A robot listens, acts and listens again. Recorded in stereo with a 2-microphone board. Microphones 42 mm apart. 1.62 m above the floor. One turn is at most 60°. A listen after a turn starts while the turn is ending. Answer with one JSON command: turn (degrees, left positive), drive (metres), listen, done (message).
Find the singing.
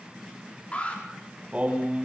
{"turn": -30}
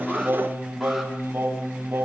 {"turn": -60}
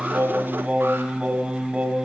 {"turn": -25}
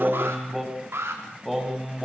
{"done": "Found it: singing, straight ahead."}